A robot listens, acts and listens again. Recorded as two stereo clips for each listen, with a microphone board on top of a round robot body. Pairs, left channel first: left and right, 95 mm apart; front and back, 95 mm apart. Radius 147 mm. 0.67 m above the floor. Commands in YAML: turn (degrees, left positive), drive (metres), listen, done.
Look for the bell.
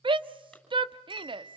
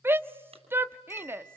turn: -60
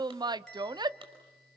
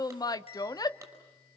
done: "Facing the bell, over 4 m away."